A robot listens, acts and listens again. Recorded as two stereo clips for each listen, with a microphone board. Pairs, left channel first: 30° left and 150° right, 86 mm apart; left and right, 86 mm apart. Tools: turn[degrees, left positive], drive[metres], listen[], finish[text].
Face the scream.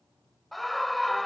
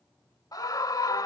Thought: The scream: 115° left.
Action: turn[115]
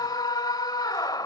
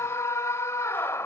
Thought: The scream is now 40° left.
Action: turn[40]
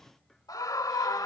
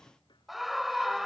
Action: finish[Found it: a scream, straight ahead.]